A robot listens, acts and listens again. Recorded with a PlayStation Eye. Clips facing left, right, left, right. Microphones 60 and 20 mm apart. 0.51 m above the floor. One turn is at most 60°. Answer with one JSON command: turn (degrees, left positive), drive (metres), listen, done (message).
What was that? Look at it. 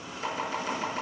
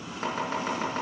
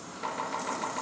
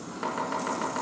{"turn": -45}
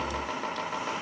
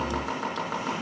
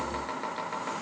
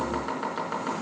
{"turn": -60}
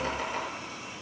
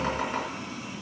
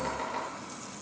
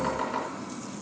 {"turn": -40}
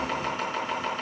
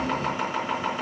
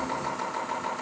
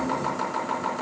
{"turn": -10}
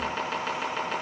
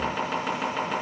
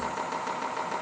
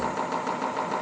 {"done": "Facing the chopping."}